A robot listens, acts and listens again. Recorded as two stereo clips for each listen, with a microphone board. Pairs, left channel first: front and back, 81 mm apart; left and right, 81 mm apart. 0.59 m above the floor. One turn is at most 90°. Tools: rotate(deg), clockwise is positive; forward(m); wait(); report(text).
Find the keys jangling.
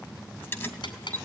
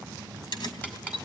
rotate(-65)
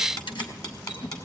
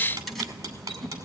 report("Facing the keys jangling, 2 to 4 m away.")